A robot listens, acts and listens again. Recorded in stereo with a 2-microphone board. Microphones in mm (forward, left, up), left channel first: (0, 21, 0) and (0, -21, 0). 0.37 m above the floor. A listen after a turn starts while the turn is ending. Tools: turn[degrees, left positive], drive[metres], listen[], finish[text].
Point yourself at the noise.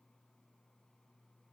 Action: listen[]
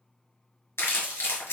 Thought: The crumpling: about 75° left or 105° left.
Action: turn[75]
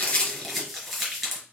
Action: finish[Found it: crumpling, straight ahead.]